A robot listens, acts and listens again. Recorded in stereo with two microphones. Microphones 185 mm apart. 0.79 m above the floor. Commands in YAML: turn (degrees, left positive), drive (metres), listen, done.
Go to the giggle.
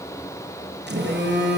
listen: true
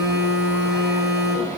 listen: true
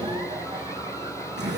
done: "I can't make out a giggle to turn to."